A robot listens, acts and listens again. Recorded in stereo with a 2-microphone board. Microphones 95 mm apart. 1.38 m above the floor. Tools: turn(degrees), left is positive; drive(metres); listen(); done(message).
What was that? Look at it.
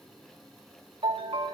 turn(degrees=-90)
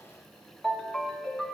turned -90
done("Facing the ringtone.")